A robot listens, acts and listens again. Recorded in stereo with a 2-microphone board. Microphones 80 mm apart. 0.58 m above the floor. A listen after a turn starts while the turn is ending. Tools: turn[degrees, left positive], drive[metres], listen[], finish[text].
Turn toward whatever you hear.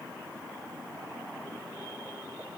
Action: listen[]
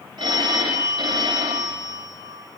Thought: The phone ringing: about 65° right or 115° right.
Action: turn[-65]
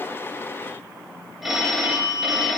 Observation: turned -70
Action: finish[Found it: a phone ringing, straight ahead, 2 to 4 m away.]